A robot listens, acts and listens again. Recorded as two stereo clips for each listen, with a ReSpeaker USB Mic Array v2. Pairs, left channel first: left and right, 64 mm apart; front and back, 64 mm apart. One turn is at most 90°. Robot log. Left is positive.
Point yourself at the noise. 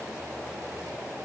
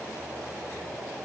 cmd idle
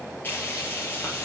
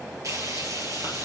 note: The frying: 145° left.
cmd yaw +90
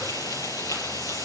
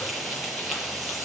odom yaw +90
note: The frying is now 90° left.
cmd yaw +90
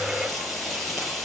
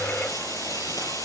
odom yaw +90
end: Facing the frying, over 4 m away.